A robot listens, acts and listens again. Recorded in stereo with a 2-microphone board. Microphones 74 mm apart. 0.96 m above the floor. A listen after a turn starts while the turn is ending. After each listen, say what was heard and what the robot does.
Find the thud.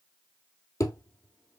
The thud: about 45° left or 135° left. Turn 45° left.
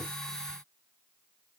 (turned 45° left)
Keep listening.
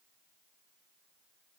I heard a thud, but can't make it out now. It was about straight ahead or 90° left.